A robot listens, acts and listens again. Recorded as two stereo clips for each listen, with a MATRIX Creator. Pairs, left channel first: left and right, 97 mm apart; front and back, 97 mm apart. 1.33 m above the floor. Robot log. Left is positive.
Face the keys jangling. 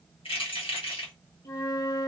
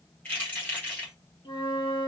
note: The keys jangling: 70° left.
cmd yaw +70
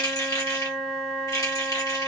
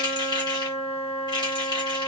note: The keys jangling is now 35° left.
cmd yaw +35
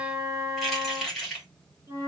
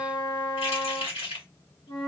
end: Found it: keys jangling, straight ahead.